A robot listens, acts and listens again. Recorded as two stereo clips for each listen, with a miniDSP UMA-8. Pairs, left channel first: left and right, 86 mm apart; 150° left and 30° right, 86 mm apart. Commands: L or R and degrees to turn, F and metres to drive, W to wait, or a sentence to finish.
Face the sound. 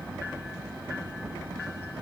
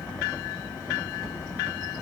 W
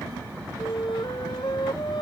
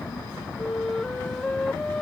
L70
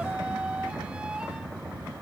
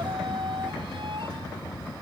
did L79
R10
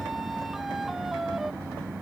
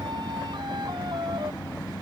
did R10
W
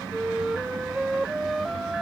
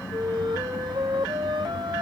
Found it: a flute, straight ahead.